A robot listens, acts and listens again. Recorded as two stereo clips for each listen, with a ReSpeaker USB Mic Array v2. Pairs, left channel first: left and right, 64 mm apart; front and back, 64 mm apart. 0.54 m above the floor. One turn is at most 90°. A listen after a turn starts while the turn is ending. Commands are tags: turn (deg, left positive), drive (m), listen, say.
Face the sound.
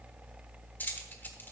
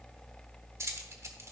<turn deg="90"/>
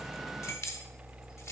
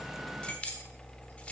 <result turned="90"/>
<turn deg="65"/>
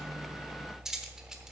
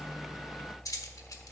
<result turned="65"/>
<turn deg="-10"/>
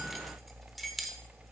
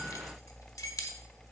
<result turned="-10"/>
<say>Facing the keys jangling, 1 to 2 m away.</say>